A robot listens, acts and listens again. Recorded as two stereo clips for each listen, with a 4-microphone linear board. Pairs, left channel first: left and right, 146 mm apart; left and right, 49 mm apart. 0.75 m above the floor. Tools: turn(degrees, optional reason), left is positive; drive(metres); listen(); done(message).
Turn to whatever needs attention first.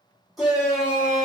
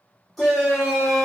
turn(degrees=30)
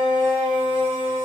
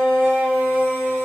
turn(degrees=150, reason="So it is at 150° left.")
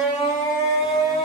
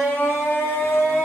turn(degrees=55, reason="The shout is now 55° left.")
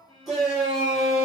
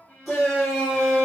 done("Facing the shout, 1 to 2 m away.")